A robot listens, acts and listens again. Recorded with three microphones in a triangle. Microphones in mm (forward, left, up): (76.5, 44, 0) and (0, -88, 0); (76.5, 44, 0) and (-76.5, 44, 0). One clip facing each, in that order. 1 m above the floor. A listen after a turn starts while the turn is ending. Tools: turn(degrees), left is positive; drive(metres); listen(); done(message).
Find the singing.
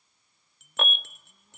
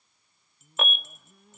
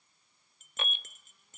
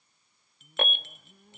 turn(degrees=-150)
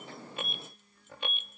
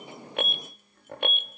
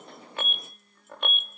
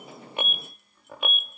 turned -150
turn(degrees=-35)
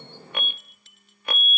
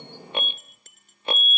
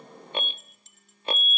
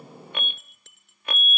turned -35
listen()
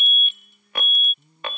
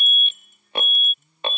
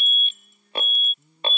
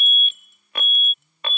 done("Facing the singing.")